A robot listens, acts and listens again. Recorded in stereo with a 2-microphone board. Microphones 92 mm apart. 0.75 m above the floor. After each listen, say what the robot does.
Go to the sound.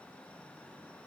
Keep listening.
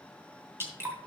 Turn 25° right.
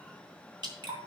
Turn 130° right.
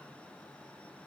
Keep listening.
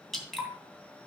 Drive 1.0 m forward.
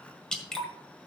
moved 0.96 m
Drive 1.0 m forward.
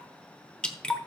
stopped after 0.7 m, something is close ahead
Turn 10° left.
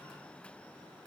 Keep listening.
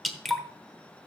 I am next to the dripping.